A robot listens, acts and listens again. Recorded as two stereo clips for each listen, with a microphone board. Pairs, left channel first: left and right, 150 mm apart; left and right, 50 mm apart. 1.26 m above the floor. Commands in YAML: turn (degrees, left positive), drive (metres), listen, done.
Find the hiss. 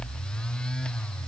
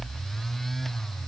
listen: true
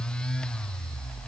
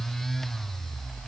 listen: true
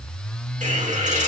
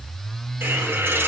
turn: -55
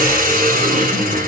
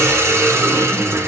turn: -75
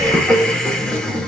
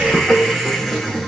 done: "Found it: a hiss, straight ahead, 2 to 4 m away."